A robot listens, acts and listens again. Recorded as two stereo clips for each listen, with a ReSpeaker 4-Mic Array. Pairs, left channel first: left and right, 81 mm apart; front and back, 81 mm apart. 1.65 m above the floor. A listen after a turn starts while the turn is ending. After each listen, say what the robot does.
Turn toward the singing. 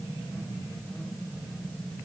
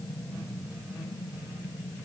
Keep listening.
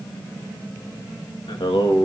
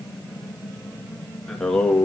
Turn 75° left.
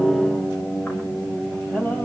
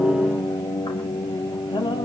Turn 15° left.
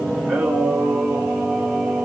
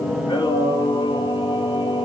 Found it: singing, straight ahead, over 4 m away.